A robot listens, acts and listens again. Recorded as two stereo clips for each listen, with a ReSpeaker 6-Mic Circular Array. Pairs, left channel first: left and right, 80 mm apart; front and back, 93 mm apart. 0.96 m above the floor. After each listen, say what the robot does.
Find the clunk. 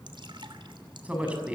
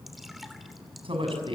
Keep listening.
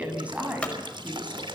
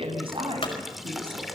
Turn 15° left.
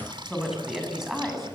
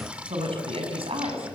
I heard a clunk from this way, but can't make it out now.